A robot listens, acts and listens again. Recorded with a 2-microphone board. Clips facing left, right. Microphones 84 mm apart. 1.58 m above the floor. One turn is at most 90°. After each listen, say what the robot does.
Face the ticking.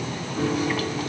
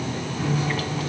Keep listening.
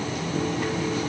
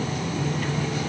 Keep listening.
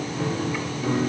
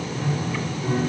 I can't make out ticking, only a piano.